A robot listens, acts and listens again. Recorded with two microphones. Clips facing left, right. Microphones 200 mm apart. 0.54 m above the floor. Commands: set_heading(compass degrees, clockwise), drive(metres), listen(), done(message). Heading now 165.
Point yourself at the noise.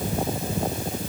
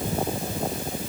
listen()
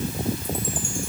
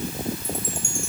listen()
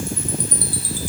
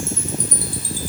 set_heading(210)
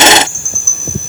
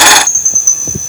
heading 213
done("Facing the chime.")